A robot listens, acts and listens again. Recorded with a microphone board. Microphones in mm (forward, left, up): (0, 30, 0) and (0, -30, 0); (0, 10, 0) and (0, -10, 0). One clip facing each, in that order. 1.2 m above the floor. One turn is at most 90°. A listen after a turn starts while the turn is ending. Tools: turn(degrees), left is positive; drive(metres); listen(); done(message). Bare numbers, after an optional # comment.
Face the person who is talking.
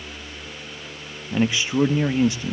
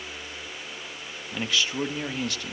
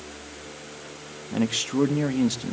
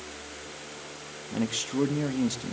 # The man speaking: about 20° left or 160° left.
turn(20)
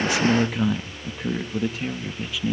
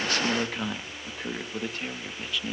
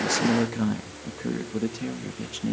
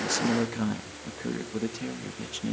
done("Facing the man speaking, 1 to 2 m away.")